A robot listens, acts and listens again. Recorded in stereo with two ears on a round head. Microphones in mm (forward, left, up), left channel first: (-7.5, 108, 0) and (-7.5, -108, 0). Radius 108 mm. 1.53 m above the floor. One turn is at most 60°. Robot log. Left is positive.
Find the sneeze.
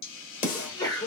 note: The sneeze: about 20° left or 160° left.
cmd yaw +20
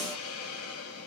cmd idle
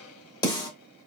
end: I heard a sneeze, but can't make it out now. It was about straight ahead or 140° left.